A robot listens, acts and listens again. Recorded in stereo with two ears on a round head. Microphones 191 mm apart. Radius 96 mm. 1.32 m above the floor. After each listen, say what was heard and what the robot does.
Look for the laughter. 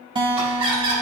The laughter: about 25° right or 155° right. Turn 25° right.
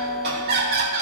So it is at 135° right. Turn 135° right.
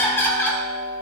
The laughter is now 10° left. Turn 10° left.
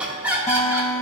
The laughter is now 10° right. Turn 10° right.
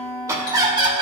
The laughter is now 25° right. Turn 25° right.
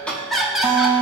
Facing the laughter.